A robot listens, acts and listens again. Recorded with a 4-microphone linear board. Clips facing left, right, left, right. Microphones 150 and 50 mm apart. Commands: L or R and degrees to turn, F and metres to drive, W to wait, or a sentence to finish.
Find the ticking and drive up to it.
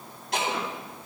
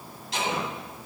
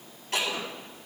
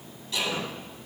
L55
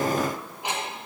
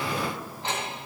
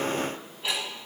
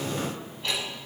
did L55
L15
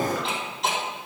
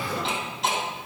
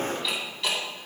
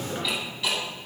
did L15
F1.0
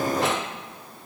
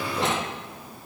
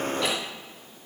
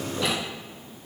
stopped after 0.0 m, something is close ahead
W
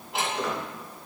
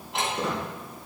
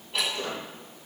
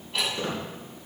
Blocked. The ticking is further on, straight ahead.